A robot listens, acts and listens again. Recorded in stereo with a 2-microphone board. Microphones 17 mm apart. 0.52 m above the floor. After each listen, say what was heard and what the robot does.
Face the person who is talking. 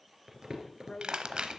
The woman speaking: about 40° left or 140° left. Turn 40° left.
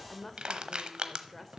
So it is at 10° left. Turn 10° left.
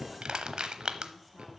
Keep listening.
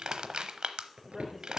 Facing the woman speaking.